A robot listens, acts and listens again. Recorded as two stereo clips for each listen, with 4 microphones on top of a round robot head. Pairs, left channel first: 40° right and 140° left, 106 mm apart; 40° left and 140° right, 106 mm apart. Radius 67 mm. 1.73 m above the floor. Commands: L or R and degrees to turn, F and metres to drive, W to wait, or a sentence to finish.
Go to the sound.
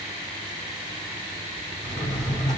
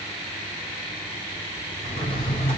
L80
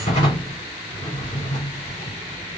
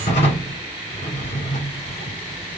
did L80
L10
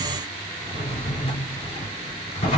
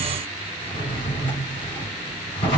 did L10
F1.0
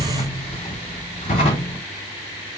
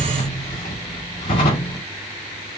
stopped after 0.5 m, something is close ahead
Blocked. The drawer is further on, straight ahead.